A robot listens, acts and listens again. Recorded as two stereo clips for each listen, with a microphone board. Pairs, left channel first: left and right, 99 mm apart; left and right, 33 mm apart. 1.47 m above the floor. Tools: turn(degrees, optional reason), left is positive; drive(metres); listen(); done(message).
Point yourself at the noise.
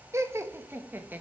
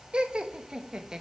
turn(degrees=-20, reason="The laughter: about 20° right or 160° right.")
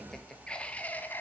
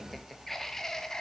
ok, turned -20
turn(degrees=20, reason="So it is at 20° left.")
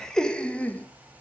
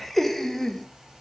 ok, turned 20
turn(degrees=15, reason="The laughter is now 15° left.")
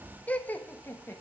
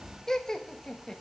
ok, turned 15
turn(degrees=25, reason="The laughter is now 25° left.")
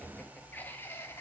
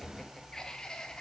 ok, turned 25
turn(degrees=25, reason="The laughter is now 25° left.")
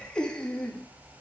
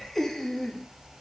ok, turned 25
turn(degrees=10, reason="The laughter is now 10° left.")
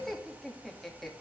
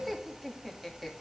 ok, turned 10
done("Found it: laughter, straight ahead, 2 to 4 m away.")